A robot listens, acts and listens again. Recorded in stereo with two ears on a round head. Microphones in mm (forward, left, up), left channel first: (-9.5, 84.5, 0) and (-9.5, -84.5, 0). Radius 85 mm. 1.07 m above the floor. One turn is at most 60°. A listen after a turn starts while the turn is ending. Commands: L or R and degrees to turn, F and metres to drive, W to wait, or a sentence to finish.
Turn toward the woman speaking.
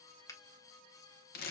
W
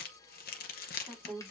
L30
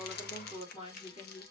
L60
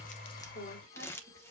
L60
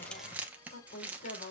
L50
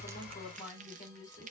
Facing the woman speaking, 2 to 4 m away.